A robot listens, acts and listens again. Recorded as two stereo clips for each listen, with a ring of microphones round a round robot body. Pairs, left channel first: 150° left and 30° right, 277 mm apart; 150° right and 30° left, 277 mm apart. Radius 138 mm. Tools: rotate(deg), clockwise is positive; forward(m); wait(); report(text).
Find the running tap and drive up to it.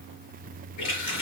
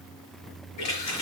rotate(-180)
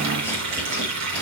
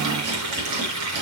forward(1.0)
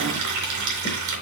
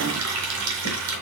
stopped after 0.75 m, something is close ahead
report("Blocked. The running tap is further on, straight ahead.")